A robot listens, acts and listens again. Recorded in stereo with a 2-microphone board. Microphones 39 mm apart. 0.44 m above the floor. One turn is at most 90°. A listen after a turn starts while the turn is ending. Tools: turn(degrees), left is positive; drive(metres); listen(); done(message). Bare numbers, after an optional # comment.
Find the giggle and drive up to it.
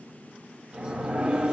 listen()
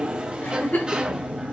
# The giggle: about 60° left or 120° left.
turn(60)
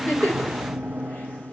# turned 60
listen()
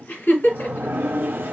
# So it is at 60° left.
turn(60)
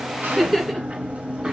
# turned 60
drive(1.0)
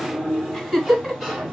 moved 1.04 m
drive(1.0)
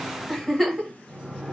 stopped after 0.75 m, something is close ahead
done("I am next to the giggle.")